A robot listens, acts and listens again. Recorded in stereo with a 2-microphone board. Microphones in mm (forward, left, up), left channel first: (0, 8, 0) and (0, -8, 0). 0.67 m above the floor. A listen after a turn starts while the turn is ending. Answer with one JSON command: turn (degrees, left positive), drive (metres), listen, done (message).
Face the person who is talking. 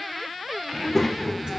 {"turn": 30}
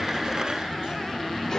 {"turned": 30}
{"turn": 140}
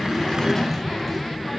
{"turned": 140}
{"turn": 30}
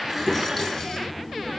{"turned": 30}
{"done": "Facing the child speaking, under 1 m away."}